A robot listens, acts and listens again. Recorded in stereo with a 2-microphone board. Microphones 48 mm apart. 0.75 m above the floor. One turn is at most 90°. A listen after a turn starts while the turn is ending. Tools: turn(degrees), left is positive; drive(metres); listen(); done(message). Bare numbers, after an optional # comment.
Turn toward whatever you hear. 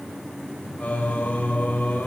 # The singing: about 30° left or 150° left.
turn(30)
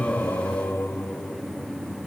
# So it is at 120° left.
turn(90)
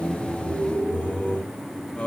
# The singing is now 30° left.
turn(30)
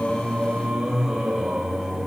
# The singing is now 10° right.
turn(-10)
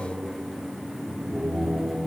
done("Found it: singing, straight ahead.")